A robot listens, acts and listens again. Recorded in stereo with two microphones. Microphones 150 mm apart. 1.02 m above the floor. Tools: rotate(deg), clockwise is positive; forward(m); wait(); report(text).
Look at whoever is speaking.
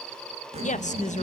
rotate(-55)
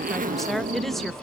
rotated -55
report("Found it: a woman speaking, straight ahead.")